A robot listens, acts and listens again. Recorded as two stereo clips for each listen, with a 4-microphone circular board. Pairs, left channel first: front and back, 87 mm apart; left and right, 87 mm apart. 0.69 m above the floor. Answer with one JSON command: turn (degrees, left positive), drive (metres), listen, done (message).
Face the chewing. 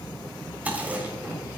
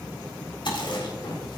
{"turn": 110}
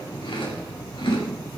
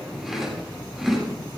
{"done": "Found it: chewing, straight ahead, 2 to 4 m away."}